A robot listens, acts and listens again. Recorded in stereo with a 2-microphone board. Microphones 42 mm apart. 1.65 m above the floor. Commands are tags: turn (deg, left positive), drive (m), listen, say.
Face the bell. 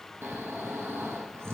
<listen/>
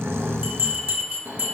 <turn deg="-40"/>
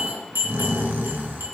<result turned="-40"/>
<turn deg="-95"/>
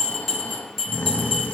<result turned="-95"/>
<say>Facing the bell, 2 to 4 m away.</say>